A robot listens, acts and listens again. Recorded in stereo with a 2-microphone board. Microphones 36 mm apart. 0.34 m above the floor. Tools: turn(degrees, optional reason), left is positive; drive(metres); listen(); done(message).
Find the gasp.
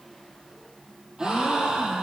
turn(degrees=-15, reason="The gasp: about 15° right or 165° right.")
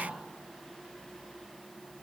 listen()
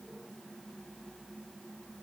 done("I heard a gasp, but can't make it out now. It was about straight ahead or 150° right.")